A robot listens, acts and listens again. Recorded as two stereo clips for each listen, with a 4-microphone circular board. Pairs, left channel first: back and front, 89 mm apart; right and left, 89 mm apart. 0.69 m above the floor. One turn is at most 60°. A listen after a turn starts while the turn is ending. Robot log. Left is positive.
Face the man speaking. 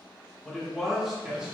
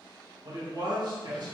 note: The man speaking: 75° left.
cmd yaw +60
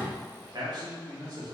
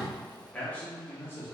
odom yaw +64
note: The man speaking is now 35° right.
cmd yaw -35
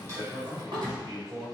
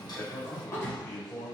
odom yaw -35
note: The man speaking is now 20° right.
cmd yaw -20
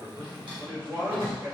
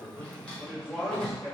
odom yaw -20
note: The man speaking is now 10° right.
cmd yaw -10
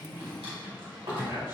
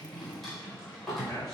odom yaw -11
end: Found it: a man speaking, straight ahead.